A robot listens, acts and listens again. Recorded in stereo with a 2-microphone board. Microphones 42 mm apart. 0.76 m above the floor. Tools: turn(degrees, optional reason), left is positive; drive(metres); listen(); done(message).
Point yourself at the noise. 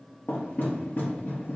turn(degrees=55, reason="The knocking: about 55° left or 125° left.")
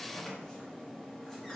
turn(degrees=15, reason="So it is at 15° left.")
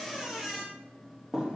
done("Facing the knocking, under 1 m away.")